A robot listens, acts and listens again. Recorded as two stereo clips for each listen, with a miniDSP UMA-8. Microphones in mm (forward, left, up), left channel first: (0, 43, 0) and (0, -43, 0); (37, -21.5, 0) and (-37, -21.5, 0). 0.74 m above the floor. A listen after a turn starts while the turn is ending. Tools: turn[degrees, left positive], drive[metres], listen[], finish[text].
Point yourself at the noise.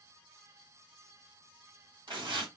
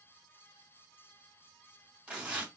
Thought: The tearing paper: 110° right.
Action: turn[-110]
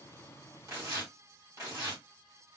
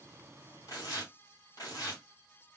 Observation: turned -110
Thought: The tearing paper is now 40° right.
Action: turn[-40]
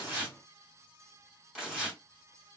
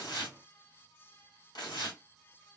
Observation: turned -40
Thought: The tearing paper is now 10° right.
Action: turn[-10]
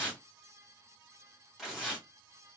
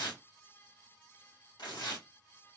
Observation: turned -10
Action: finish[Found it: tearing paper, straight ahead, 2 to 4 m away.]